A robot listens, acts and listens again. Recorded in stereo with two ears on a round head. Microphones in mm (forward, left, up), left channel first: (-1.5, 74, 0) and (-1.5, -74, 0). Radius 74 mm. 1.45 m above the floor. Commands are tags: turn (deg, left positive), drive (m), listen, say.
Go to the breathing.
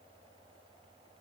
<listen/>
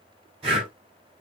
<turn deg="-35"/>
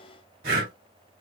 <turn deg="-105"/>
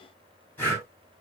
<turn deg="15"/>
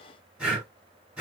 <drive m="1.0"/>
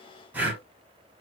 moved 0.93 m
<turn deg="-15"/>
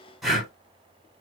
<drive m="1.0"/>
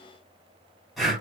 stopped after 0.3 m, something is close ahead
<say>I am next to the breathing.</say>